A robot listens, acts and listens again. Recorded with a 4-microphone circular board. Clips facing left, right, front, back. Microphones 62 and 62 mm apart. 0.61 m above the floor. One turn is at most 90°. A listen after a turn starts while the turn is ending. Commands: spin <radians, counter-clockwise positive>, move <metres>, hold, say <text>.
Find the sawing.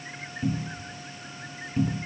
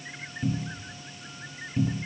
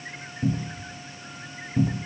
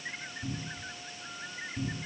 hold
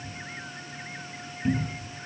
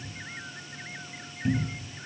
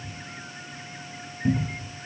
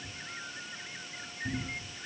hold
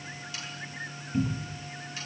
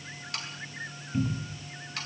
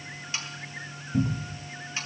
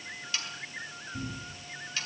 spin -1.13
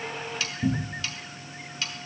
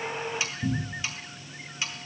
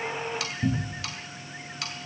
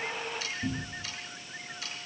spin -0.26
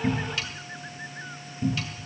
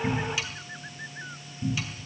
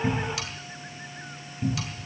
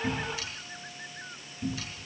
hold
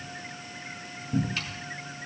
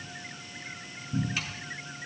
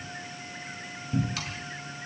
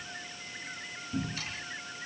hold
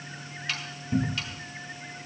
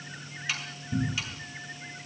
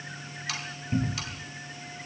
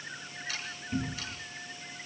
say Facing the sawing, over 4 m away.